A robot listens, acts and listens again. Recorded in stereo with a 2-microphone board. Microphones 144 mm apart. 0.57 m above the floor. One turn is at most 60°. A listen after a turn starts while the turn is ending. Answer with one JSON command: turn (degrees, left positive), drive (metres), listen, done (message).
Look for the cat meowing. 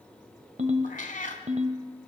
{"turn": 60}
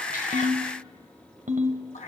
{"turn": 55}
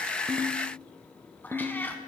{"turn": 15}
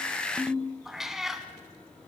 {"done": "Found it: a cat meowing, straight ahead."}